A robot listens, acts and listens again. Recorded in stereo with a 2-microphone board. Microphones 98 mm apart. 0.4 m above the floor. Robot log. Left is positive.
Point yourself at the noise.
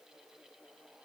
cmd idle
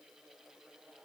cmd idle
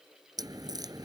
note: The crack: about 40° right or 140° right.
cmd yaw -40
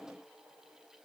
cmd idle
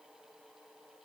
end: I heard a crack, but can't make it out now. It was about straight ahead or 100° right.